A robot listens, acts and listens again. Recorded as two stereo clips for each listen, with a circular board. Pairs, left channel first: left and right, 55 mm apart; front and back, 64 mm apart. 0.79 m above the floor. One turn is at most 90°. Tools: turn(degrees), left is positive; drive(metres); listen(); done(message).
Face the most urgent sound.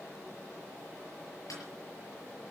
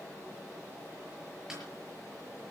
listen()
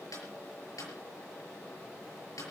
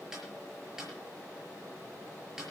listen()
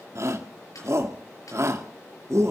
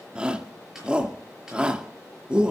turn(degrees=-90)
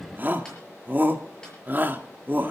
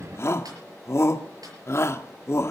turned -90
turn(degrees=-40)
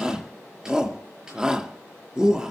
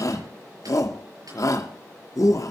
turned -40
turn(degrees=-15)
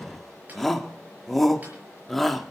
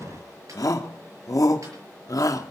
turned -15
done("Found it: a shout, straight ahead, 1 to 2 m away.")